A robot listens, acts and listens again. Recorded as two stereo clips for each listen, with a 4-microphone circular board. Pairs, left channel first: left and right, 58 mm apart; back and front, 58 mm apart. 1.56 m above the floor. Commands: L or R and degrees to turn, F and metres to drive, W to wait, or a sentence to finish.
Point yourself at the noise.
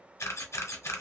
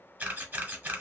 L60
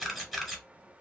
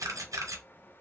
Facing the camera shutter, 1 to 2 m away.